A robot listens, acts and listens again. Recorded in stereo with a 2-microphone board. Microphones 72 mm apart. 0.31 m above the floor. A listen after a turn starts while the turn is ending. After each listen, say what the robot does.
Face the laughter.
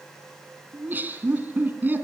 Turn 25° right.
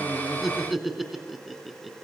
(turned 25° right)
Found it: laughter, straight ahead.